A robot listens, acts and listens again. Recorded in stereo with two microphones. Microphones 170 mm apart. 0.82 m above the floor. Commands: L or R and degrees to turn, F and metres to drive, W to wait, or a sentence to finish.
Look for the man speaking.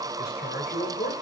L75
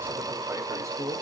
R20
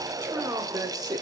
R25
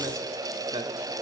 R25
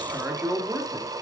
R15
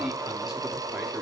W
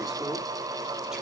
W
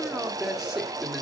Found it: a man speaking, straight ahead, 1 to 2 m away.